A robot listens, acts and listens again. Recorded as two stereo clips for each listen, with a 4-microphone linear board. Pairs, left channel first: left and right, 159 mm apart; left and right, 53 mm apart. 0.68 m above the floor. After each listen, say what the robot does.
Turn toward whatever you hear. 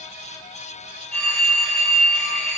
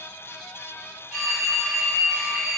Turn 30° left.
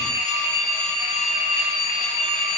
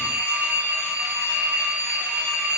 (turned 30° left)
Turn 25° right.
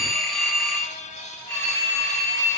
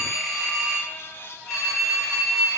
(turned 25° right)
Facing the phone ringing.